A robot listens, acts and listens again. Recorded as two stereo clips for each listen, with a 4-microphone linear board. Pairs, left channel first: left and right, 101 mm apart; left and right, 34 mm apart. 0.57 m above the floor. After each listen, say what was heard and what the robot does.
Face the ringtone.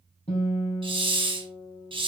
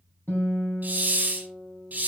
Keep listening.
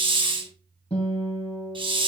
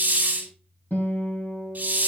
Keep listening.
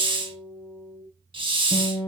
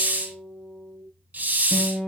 I can't make out a ringtone, only a guitar and a hiss.